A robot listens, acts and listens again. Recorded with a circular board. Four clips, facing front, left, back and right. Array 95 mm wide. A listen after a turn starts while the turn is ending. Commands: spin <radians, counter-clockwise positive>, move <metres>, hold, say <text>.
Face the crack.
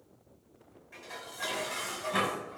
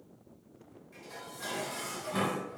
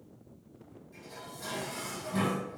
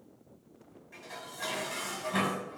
hold
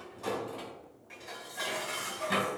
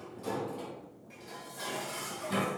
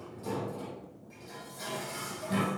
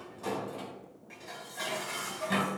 hold
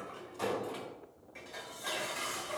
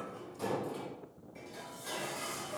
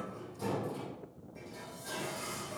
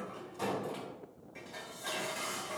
say I can't make out a crack to turn to.